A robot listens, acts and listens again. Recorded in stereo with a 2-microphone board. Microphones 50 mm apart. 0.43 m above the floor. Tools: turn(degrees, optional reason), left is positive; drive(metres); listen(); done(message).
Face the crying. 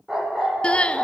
turn(degrees=20, reason="The crying: about 20° left or 160° left.")
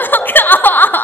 turn(degrees=140, reason="So it is at 140° left.")
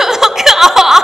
turn(degrees=-10, reason="The crying is now 10° right.")
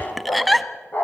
done("Found it: crying, straight ahead, 1 to 2 m away.")